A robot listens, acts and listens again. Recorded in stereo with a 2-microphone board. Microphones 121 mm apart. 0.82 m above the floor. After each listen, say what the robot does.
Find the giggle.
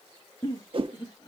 Turn 40° left.
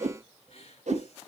Keep listening.
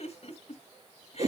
Turn 100° left.
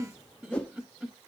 Facing the giggle.